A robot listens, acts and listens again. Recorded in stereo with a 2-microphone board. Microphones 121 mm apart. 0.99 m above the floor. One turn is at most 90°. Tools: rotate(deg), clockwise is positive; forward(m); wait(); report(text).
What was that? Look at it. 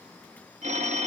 rotate(70)
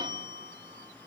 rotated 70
rotate(40)
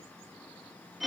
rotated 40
report("Facing the phone ringing.")